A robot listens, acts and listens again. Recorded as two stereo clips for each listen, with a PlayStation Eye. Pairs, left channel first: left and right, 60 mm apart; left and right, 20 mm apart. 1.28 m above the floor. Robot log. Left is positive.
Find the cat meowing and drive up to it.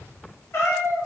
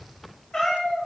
note: The cat meowing: about 45° left or 135° left.
cmd yaw +45
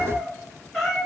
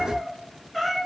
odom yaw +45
cmd fwd 1.0
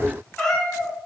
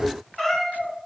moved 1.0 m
note: The cat meowing is now 10° left.
cmd yaw +10
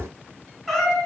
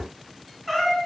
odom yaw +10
cmd fwd 1.0
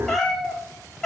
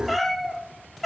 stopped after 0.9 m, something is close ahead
note: The cat meowing is now 10° left.
cmd yaw +10
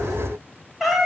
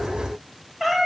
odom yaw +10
end: I am next to the cat meowing.